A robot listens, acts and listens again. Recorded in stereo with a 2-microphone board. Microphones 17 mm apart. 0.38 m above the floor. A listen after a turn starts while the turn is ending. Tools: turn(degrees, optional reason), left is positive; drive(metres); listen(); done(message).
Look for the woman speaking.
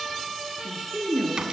turn(degrees=70, reason="The woman speaking: about 70° left or 110° left.")
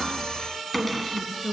turn(degrees=40, reason="So it is at 40° left.")
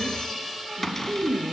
turn(degrees=25, reason="The woman speaking is now 25° left.")
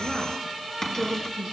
turn(degrees=25, reason="The woman speaking is now 25° left.")
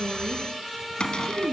turn(degrees=-15, reason="The woman speaking is now 15° right.")
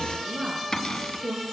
done("Found it: a woman speaking, straight ahead, over 4 m away.")